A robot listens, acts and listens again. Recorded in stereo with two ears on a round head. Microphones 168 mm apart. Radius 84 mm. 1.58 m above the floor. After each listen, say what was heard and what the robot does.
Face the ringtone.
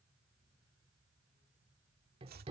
Keep listening.
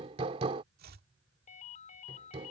The ringtone: about 40° left or 140° left. Turn 40° left.
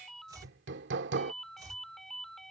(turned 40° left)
Facing the ringtone.